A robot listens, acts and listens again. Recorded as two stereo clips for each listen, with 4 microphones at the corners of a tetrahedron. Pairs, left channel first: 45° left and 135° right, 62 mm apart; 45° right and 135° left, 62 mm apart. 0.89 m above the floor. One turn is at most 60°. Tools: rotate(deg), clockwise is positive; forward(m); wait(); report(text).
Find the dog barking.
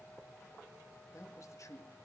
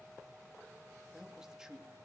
wait()
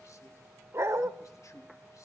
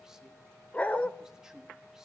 rotate(60)
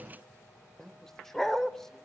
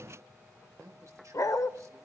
rotate(40)
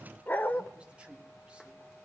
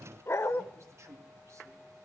rotate(10)
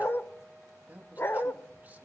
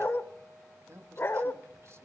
report("Facing the dog barking, 1 to 2 m away.")